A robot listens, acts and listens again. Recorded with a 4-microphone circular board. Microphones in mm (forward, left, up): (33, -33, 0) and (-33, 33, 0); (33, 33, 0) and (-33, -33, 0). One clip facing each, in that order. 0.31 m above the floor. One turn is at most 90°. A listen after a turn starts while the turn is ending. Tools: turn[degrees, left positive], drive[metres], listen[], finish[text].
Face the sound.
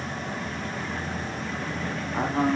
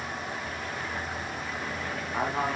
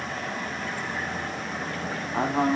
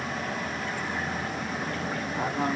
Thought: The man speaking: 50° left.
Action: turn[50]
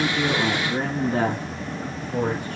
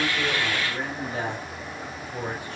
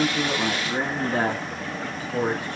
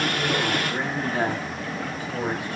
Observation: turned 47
Thought: The man speaking is now 15° right.
Action: turn[-15]
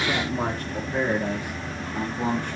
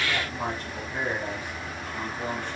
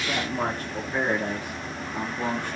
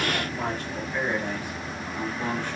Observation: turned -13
Thought: The man speaking is now 10° right.
Action: turn[-10]
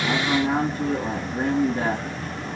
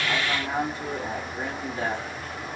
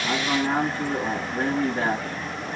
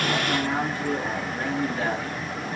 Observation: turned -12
Action: finish[Found it: a man speaking, straight ahead.]